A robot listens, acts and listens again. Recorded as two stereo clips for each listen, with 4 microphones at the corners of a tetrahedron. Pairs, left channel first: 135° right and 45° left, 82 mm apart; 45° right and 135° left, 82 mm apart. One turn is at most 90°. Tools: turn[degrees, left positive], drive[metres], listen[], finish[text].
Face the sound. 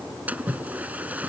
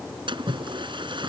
Thought: The splash: 115° left.
Action: turn[90]
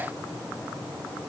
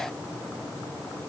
Thought: Nothing new. It was at 25° left.
Action: turn[25]
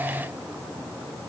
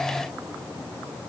Action: finish[I heard a splash from this way, but can't make it out now.]